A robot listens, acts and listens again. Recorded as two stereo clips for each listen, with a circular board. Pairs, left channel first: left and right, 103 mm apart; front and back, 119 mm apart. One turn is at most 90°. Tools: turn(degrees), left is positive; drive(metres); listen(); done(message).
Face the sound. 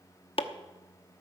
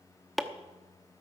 turn(degrees=90)
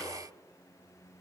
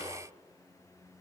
listen()
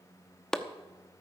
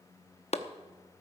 done("Facing the chopping, under 1 m away.")